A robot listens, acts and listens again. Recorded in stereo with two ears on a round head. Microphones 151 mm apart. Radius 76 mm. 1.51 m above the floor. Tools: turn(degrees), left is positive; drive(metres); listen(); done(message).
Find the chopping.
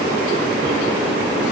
listen()
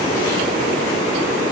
listen()
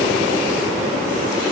done("I can't make out chopping to turn to.")